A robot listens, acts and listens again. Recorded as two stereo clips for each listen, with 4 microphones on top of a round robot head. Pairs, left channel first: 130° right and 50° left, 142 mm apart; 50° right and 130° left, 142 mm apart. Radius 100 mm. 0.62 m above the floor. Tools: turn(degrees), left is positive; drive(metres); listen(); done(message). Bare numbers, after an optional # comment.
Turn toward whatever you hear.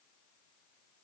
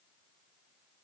listen()
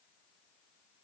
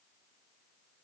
listen()
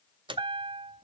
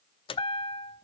done("Found it: a chime, straight ahead, under 1 m away.")